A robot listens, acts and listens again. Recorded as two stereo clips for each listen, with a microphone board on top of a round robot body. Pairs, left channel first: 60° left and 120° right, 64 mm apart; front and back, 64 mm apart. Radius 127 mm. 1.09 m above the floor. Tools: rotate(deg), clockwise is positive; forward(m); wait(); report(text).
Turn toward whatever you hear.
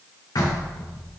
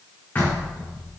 rotate(-60)
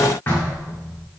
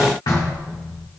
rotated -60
report("Found it: knocking, straight ahead.")